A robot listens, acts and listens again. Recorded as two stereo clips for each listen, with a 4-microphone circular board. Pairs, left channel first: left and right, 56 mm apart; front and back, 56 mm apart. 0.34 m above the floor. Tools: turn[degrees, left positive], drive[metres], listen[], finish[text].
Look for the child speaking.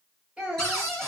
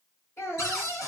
Thought: The child speaking: 20° right.
Action: turn[-20]
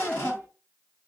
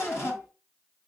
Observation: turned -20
Thought: The child speaking is now 15° left.
Action: turn[15]
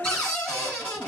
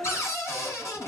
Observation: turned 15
Thought: The child speaking is now 10° left.
Action: turn[10]
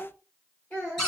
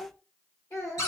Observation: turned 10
Thought: The child speaking is now 25° left.
Action: turn[25]
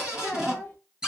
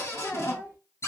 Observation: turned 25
Thought: The child speaking is now 10° left.
Action: turn[10]
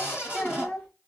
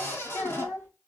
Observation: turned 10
Action: finish[Found it: a child speaking, straight ahead, 2 to 4 m away.]